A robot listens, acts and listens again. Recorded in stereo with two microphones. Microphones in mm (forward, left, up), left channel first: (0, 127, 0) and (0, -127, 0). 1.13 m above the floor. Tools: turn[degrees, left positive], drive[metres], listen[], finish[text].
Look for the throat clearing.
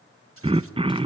Thought: The throat clearing: about 20° right or 160° right.
Action: turn[-20]
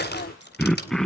Action: finish[Found it: throat clearing, straight ahead.]